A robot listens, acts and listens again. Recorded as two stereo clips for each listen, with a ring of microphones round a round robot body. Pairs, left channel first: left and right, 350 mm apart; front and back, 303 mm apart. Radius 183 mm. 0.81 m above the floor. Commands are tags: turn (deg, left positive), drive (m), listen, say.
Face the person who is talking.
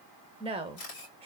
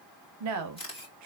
<turn deg="-165"/>
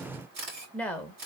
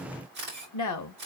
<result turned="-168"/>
<say>Facing the woman speaking, 1 to 2 m away.</say>